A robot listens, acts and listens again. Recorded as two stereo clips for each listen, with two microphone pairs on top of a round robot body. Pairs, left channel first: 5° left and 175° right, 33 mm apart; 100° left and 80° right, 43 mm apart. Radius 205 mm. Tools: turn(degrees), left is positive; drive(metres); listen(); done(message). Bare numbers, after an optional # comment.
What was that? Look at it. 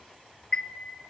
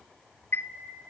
# The chime: 70° left.
turn(70)
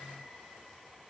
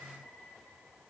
listen()
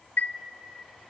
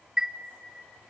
done("Facing the chime.")